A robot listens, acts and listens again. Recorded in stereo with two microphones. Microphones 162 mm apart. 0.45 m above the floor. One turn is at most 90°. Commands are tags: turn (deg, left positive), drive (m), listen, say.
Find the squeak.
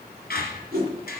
<turn deg="75"/>
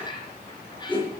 <turn deg="30"/>
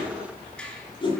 <say>Found it: a squeak, straight ahead.</say>